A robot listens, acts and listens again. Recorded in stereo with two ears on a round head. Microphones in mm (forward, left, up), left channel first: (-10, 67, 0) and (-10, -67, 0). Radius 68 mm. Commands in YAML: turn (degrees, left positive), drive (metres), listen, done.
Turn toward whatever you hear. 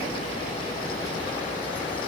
listen: true
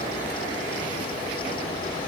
listen: true
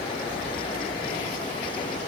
done: "I can't make out anything to turn to."